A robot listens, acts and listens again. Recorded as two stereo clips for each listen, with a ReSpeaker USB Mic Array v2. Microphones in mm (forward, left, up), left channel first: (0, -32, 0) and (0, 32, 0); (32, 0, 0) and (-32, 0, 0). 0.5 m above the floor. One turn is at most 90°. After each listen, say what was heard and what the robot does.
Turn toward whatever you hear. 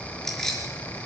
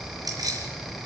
The keys jangling: 170° right. Turn 90° right.
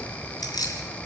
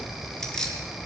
The keys jangling is now 80° right. Turn 80° right.
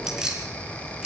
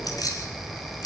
The keys jangling is now 15° left. Turn 15° left.
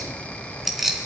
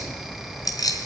Facing the keys jangling, 2 to 4 m away.